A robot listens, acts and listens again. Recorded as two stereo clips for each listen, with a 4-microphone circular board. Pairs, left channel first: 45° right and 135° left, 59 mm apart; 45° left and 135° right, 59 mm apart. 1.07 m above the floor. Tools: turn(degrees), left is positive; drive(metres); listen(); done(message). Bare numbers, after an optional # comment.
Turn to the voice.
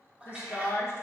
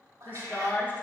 # The woman speaking: 10° right.
turn(-10)
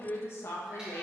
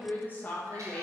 # The woman speaking is now 15° right.
turn(-15)
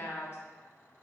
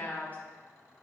# The woman speaking is now 10° right.
turn(-10)
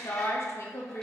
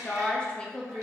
# The woman speaking is now 30° right.
turn(-30)
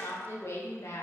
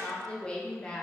# The woman speaking is now 30° right.
turn(-30)
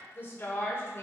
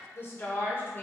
done("Found it: a woman speaking, straight ahead.")